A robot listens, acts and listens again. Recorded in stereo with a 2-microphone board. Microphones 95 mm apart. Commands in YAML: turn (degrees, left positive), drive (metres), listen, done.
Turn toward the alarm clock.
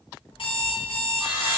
turn: 65
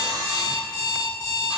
turn: 45
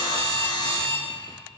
turn: -15
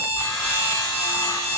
turn: -10
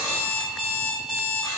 done: "Facing the alarm clock, 2 to 4 m away."